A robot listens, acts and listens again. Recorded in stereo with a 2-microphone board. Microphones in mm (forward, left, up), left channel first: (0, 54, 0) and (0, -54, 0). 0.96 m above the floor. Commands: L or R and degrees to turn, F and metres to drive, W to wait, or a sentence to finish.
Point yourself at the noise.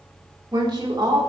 R40
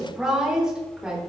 Facing the woman speaking.